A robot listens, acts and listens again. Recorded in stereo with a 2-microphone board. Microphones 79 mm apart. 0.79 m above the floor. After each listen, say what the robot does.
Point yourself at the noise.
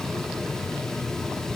Keep listening.
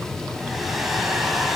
Turn 30° left.
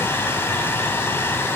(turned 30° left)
Turn 150° left.
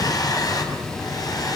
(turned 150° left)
Turn 50° left.
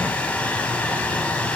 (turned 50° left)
Turn 15° left.
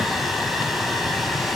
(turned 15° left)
Facing the hair dryer.